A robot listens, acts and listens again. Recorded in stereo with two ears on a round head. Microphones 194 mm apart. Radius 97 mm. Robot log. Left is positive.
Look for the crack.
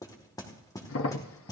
note: The crack: about 65° left or 115° left.
cmd yaw +65
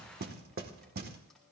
cmd idle
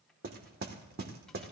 end: I heard a crack, but can't make it out now. It was about straight ahead or 50° left.